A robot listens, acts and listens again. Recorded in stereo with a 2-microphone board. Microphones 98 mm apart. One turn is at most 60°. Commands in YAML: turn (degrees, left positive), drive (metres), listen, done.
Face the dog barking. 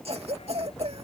turn: 60
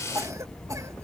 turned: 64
turn: 15
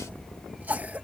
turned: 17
done: "Facing the dog barking."